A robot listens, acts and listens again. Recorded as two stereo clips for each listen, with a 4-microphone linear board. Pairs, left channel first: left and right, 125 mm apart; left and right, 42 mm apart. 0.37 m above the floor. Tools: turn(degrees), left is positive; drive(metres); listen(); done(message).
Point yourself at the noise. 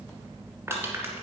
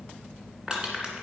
turn(degrees=-20)
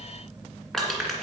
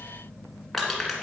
done("Found it: crushing, straight ahead, 2 to 4 m away.")